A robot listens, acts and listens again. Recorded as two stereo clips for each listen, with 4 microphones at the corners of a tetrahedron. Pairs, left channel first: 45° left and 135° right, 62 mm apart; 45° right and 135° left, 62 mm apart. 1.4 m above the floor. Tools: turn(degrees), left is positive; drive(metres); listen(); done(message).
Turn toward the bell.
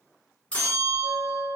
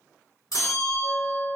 turn(degrees=-25)
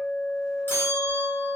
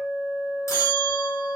turn(degrees=-10)
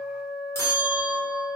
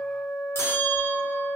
done("Facing the bell.")